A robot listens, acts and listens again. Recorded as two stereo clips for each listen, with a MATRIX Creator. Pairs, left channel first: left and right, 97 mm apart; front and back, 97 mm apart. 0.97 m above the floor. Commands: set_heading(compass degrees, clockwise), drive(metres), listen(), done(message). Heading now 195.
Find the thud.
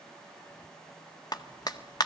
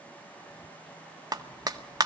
listen()
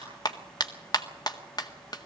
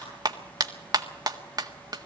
listen()
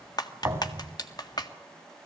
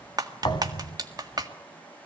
set_heading(225)
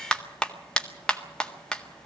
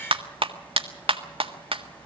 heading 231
done("I heard a thud from this way, but can't make it out now.")